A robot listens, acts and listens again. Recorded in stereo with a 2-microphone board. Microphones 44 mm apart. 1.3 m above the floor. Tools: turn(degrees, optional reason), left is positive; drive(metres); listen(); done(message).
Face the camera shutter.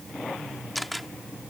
turn(degrees=30)
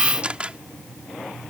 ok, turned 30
turn(degrees=-25, reason="So it is at 25° right.")
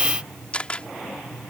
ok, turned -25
turn(degrees=25, reason="The camera shutter is now 25° left.")
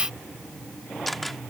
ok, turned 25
done("Found it: a camera shutter, straight ahead.")